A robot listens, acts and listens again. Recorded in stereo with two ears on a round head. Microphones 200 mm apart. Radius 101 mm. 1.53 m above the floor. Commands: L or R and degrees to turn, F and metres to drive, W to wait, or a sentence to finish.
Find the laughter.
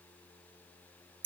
W
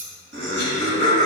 R55
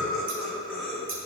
Found it: laughter, straight ahead, 2 to 4 m away.